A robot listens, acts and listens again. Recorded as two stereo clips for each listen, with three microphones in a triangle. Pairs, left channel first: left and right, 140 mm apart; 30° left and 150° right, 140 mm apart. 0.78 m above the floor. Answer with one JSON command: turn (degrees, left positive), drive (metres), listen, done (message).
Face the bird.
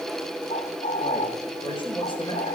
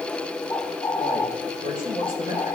{"turn": 80}
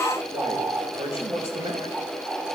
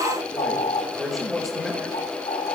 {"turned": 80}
{"turn": -20}
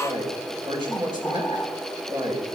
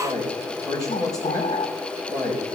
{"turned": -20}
{"listen": true}
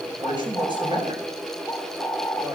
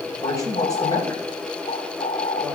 {"done": "Facing the bird."}